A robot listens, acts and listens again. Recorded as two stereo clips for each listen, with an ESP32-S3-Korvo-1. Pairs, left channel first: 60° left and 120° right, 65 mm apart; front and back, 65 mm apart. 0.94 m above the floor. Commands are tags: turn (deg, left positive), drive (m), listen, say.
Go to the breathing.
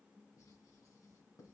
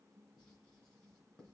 <listen/>
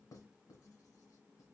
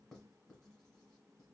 <listen/>
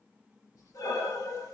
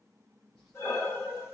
<turn deg="50"/>
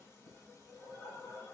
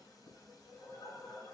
<turn deg="15"/>
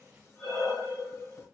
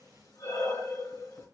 <drive m="1.0"/>
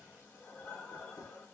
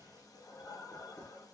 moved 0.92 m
<drive m="1.0"/>
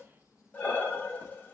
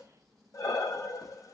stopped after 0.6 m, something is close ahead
<say>I am next to the breathing.</say>